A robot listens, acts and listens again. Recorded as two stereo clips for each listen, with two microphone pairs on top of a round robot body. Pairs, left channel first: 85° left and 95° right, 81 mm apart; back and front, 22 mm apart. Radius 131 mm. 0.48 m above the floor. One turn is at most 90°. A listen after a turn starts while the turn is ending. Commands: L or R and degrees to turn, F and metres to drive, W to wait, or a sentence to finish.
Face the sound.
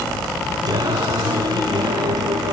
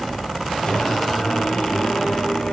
R90
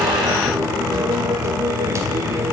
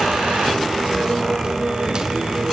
R40
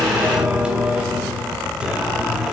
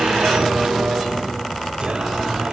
R20
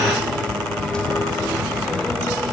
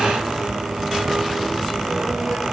W
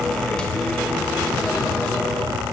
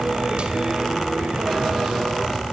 W
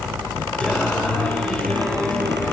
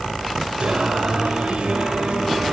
Found it: singing, straight ahead.